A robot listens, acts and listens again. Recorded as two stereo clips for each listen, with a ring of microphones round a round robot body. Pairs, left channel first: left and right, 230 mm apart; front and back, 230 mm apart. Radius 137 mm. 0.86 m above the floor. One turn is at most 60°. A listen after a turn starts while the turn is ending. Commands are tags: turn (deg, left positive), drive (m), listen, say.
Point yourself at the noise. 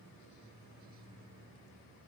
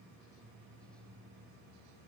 <listen/>
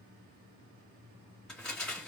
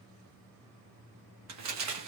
<turn deg="60"/>
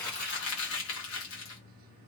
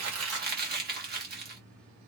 <turn deg="60"/>
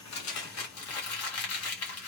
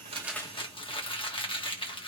<turn deg="60"/>
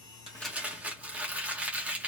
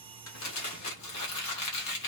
<say>Facing the crumpling, 1 to 2 m away.</say>